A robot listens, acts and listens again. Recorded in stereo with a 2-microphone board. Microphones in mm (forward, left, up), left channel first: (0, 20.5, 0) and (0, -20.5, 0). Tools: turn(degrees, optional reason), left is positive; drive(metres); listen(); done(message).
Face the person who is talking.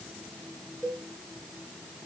listen()
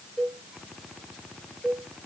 listen()
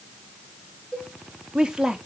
turn(degrees=-20, reason="The woman speaking: about 20° right or 160° right.")
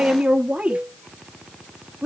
turn(degrees=-140, reason="So it is at 140° right.")
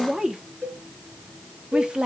turn(degrees=-20, reason="The woman speaking is now 20° right.")
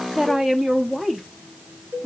done("Found it: a woman speaking, straight ahead, 1 to 2 m away.")